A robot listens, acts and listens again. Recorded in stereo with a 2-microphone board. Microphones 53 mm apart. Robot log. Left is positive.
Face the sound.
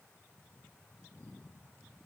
cmd idle
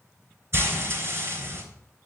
note: The frying: about 50° right or 130° right.
cmd yaw -50
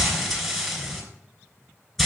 end: Facing the frying.